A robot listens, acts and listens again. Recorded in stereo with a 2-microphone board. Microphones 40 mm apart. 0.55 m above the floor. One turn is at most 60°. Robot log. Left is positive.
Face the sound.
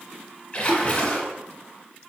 note: The splash: about 25° left or 155° left.
cmd yaw +25
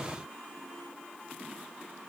cmd idle
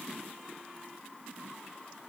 end: I heard a splash, but can't make it out now. It was about straight ahead or 130° left.